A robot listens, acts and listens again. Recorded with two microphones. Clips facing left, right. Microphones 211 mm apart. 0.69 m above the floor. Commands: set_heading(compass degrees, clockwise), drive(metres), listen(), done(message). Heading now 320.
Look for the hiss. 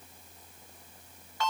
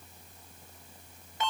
listen()
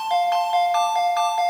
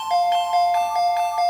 listen()
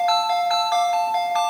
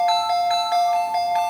done("I can't make out a hiss to turn to.")